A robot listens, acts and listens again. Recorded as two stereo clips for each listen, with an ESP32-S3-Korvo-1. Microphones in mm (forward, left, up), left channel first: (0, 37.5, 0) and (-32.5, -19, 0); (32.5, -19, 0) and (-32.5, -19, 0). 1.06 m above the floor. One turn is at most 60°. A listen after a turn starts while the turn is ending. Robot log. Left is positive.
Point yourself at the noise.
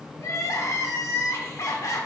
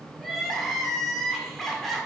note: The crying: 85° left.
cmd yaw +60
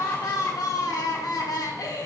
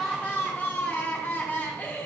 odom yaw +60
note: The crying is now 60° left.
cmd yaw +60
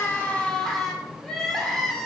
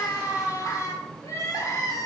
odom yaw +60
note: The crying is now 20° right.
cmd yaw -20
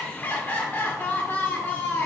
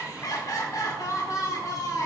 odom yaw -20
end: Found it: crying, straight ahead.